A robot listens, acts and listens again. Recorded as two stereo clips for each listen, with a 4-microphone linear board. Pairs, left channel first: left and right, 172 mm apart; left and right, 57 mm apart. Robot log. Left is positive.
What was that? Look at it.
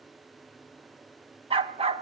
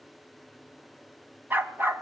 note: The dog barking: about 35° right or 145° right.
cmd yaw -35
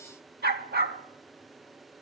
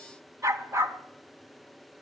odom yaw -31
note: So it is at 110° right.
cmd yaw -110
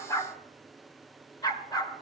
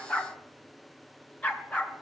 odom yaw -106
note: The dog barking is now 20° left.
cmd yaw +20
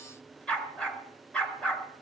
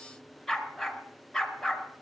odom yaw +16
end: Found it: a dog barking, straight ahead.